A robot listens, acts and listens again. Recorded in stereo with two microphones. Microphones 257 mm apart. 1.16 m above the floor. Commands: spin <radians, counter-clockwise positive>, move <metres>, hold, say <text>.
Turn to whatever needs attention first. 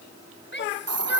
spin 0.79
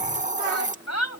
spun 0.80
spin 1.57
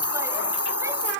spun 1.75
spin -0.17
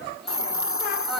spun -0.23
hold
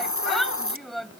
say Facing the shout.